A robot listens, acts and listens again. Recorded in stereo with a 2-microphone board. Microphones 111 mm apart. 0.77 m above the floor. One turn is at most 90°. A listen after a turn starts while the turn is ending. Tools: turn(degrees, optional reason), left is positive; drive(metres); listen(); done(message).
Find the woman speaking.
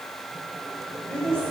turn(degrees=30)
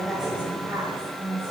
turn(degrees=-25, reason="So it is at 25° right.")
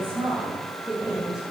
done("Facing the woman speaking, over 4 m away.")